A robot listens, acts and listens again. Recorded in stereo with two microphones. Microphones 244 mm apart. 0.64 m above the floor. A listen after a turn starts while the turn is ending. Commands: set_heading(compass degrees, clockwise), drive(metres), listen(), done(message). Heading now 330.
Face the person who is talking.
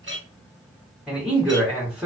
set_heading(0)
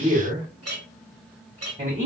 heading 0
set_heading(145)
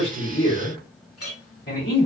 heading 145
set_heading(100)
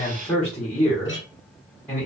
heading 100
done("Found it: a man speaking, straight ahead, 1 to 2 m away.")